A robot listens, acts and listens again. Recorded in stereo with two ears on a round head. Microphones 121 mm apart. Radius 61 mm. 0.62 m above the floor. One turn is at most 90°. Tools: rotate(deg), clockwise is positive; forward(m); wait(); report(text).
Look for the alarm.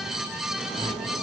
wait()
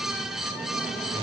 wait()
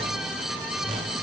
report("I can't make out an alarm to turn to.")